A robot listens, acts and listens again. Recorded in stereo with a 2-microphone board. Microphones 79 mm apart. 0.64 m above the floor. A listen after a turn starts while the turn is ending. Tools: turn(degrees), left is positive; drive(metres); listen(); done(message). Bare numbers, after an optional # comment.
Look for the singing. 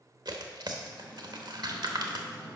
# The singing: about 30° right or 150° right.
turn(-30)
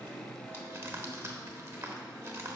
done("Facing the singing.")